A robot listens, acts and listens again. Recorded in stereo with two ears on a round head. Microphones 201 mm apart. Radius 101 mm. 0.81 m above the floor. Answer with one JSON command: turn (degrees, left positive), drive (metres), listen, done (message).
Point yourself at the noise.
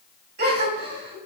{"turn": -50}
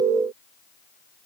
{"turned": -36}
{"listen": true}
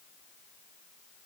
{"done": "I heard a gasp, but can't make it out now. It was about 10° right or 95° right."}